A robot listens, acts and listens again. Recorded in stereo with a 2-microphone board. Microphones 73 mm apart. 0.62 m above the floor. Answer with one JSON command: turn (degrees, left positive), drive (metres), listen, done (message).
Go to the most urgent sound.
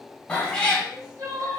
{"turn": -55}
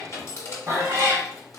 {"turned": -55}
{"listen": true}
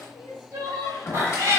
{"turn": -60}
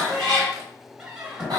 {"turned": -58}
{"listen": true}
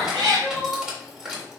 {"drive": 1.0}
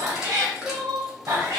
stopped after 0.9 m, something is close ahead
{"done": "I am next to the crying."}